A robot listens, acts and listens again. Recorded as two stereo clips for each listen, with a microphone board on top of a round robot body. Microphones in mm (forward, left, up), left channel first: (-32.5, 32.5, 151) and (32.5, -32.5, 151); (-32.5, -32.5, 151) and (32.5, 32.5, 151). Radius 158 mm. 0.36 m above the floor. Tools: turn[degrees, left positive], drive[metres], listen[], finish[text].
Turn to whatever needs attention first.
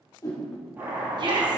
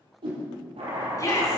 Thought: The shout: 80° right.
Action: turn[-80]
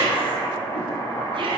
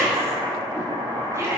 Thought: The shout is now 15° right.
Action: turn[-15]
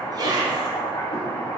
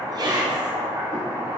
Action: finish[Facing the shout, over 4 m away.]